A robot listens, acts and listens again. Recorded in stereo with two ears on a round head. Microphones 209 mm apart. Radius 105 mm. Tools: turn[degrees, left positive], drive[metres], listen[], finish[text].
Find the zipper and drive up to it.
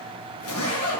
Thought: The zipper: about 70° left or 110° left.
Action: turn[70]
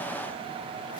Action: listen[]
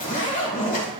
Thought: So it is at 35° left.
Action: turn[35]
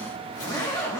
Thought: The zipper is now 20° left.
Action: turn[20]
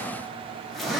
Action: drive[1.0]
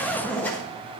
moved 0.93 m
Thought: The zipper is now 10° left.
Action: turn[10]
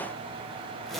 Action: drive[1.0]
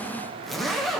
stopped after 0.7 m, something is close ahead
Action: finish[Arrived at the zipper, straight ahead.]